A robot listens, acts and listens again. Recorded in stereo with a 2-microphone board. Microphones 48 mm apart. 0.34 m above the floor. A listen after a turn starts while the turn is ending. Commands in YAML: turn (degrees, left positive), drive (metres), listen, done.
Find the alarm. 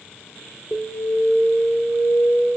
turn: 15
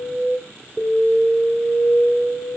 done: "Facing the alarm, 2 to 4 m away."